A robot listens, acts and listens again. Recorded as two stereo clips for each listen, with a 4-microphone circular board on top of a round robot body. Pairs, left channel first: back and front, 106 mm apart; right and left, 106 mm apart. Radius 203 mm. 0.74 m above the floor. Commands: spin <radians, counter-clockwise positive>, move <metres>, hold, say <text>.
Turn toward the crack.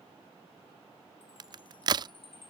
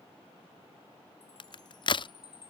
spin -0.87
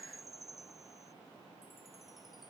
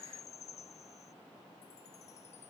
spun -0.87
say I heard a crack from this way, but can't make it out now.